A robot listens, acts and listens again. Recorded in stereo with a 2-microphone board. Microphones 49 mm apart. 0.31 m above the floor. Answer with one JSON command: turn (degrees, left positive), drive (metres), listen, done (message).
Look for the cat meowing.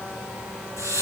{"listen": true}
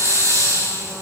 {"listen": true}
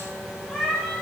{"turn": 30}
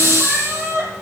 {"turn": -40}
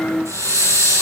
{"listen": true}
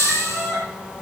{"done": "Facing the cat meowing, over 4 m away."}